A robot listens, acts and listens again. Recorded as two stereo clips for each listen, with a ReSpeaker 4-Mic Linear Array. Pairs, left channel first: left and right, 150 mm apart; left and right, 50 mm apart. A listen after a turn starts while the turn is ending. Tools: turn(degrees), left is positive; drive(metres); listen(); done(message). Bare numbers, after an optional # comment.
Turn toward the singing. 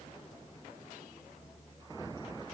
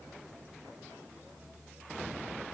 listen()
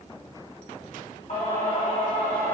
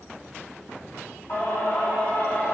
# The singing: about 40° left or 140° left.
turn(40)
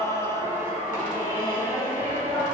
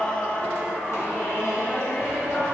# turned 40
# So it is at 115° left.
turn(115)
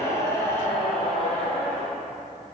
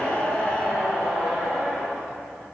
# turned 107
done("Found it: singing, straight ahead, 2 to 4 m away.")